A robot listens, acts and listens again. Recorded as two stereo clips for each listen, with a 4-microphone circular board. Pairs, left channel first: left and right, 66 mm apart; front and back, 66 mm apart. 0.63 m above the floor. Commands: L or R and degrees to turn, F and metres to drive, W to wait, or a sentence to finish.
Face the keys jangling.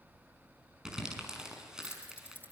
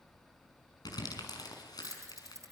L150
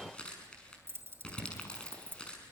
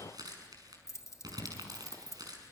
R35
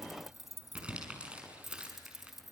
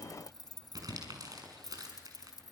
Facing the keys jangling.